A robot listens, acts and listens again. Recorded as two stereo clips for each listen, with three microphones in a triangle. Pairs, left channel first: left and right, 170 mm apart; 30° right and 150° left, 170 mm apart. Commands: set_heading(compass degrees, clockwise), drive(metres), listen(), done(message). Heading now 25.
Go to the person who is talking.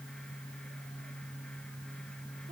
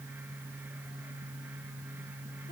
listen()
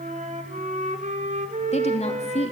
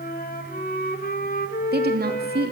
set_heading(250)
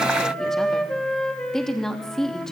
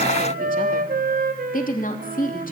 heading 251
drive(1.0)
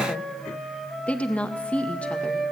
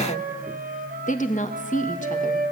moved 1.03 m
drive(1.0)
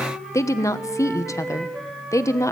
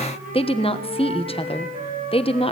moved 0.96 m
set_heading(231)
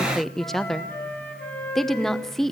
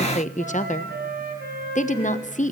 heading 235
drive(1.0)
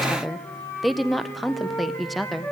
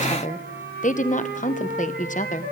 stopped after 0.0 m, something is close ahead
done("Arrived at the woman speaking, straight ahead.")